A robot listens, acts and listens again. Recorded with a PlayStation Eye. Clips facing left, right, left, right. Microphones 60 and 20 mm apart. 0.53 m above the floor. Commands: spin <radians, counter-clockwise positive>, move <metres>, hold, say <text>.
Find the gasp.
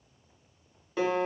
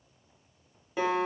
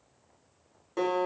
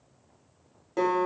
hold
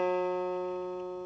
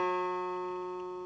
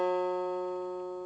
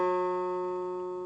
hold
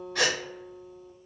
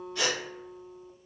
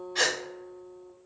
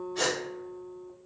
spin 1.57
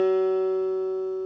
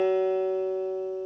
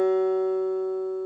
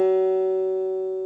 say Facing where the gasp came from. I can't hear it now.